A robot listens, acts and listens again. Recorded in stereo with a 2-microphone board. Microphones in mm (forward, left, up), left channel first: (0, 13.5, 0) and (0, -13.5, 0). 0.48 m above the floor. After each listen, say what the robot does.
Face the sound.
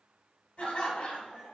Turn 55° left.
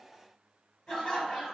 Turn 45° left.
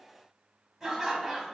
Found it: laughter, straight ahead, 1 to 2 m away.